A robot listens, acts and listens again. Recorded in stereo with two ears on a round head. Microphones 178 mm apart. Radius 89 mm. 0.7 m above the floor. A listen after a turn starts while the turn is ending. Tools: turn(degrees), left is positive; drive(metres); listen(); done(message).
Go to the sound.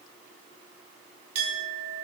turn(degrees=-90)
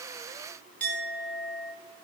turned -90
turn(degrees=10)
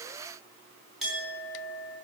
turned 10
drive(metres=1.0)
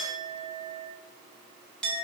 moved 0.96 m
drive(metres=1.0)
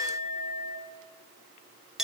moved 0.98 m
drive(metres=1.0)
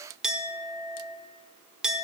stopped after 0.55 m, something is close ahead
done("I am next to the clink.")